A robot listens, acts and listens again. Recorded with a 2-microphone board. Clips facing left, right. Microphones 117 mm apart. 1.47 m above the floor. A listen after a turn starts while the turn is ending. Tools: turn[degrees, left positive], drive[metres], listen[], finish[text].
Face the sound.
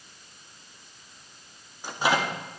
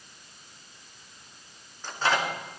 Action: turn[30]
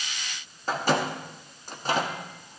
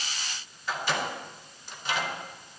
Thought: So it is at 135° left.
Action: turn[135]
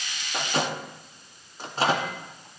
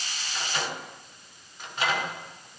Thought: The microwave is now 35° left.
Action: turn[35]
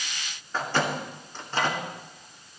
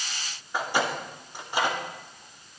Thought: The microwave is now 15° right.
Action: turn[-15]
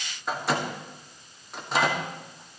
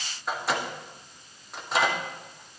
Action: finish[Facing the microwave.]